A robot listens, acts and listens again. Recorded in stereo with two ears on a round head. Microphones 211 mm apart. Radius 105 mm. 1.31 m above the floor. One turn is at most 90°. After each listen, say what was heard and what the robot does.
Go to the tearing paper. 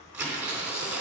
Turn 30° right.
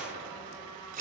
So it is at 145° right. Turn 90° right.
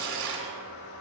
The tearing paper is now 60° right. Turn 60° right.
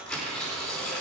Drive 1.0 m forward.
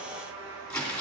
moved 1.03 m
Drive 1.0 m forward.
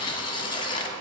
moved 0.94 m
The tearing paper is now 20° left. Turn 20° left.
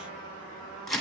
Drive 1.0 m forward.
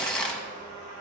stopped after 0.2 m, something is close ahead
Arrived at the tearing paper, straight ahead.